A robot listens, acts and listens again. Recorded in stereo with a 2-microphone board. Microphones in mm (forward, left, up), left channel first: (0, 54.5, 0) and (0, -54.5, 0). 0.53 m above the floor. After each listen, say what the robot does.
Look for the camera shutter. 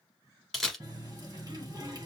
Turn 30° left.
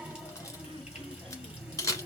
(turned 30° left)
Turn 150° left.
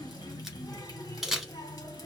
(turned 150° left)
Facing the camera shutter.